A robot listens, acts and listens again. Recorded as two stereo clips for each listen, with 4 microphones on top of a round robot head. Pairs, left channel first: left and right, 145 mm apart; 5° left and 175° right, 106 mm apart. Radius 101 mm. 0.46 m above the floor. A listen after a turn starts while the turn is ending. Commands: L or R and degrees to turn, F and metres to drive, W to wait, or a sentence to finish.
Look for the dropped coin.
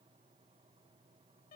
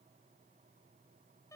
W
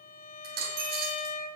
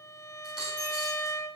R85
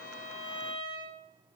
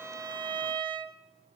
I heard a dropped coin from this way, but can't make it out now.